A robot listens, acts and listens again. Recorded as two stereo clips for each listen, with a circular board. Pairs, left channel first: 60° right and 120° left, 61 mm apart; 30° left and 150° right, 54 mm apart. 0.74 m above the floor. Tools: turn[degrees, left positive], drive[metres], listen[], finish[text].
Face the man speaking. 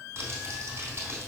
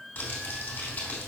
Action: listen[]
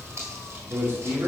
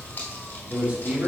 Thought: The man speaking: 160° left.
Action: turn[160]
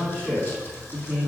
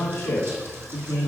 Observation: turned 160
Thought: The man speaking is now 30° left.
Action: turn[30]
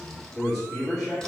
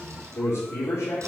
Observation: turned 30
Action: finish[Facing the man speaking, 2 to 4 m away.]